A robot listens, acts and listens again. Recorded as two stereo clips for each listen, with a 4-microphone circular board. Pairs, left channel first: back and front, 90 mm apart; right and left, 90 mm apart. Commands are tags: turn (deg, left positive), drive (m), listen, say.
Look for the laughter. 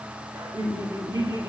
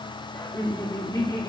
<turn deg="-45"/>
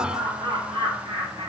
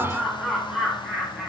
<say>Facing the laughter.</say>